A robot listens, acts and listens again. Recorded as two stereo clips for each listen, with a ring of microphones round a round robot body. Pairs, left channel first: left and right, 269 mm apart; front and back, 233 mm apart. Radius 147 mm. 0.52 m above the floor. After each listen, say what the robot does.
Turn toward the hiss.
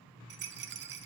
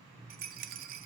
Keep listening.
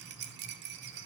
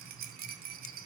Keep listening.
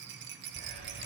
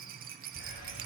Turn 45° right.
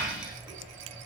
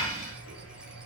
Found it: a hiss, straight ahead.